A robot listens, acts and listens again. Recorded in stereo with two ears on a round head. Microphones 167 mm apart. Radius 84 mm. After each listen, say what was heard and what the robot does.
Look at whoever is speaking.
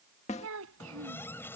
Turn 90° right.
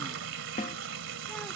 Keep listening.
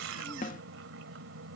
Keep listening.
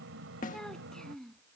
Found it: a child speaking, straight ahead.